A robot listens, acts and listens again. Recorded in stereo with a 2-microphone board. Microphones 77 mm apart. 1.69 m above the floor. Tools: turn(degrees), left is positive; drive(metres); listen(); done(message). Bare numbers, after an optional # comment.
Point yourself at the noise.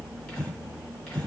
turn(30)
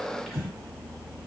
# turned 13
done("Found it: breathing, straight ahead.")